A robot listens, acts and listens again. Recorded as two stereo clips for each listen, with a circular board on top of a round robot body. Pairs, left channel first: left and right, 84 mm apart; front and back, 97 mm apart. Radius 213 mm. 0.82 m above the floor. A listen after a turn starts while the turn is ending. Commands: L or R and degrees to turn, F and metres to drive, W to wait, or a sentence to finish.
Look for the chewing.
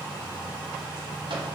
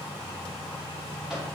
W
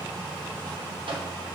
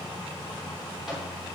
W
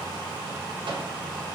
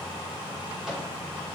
I can't make out chewing to turn to.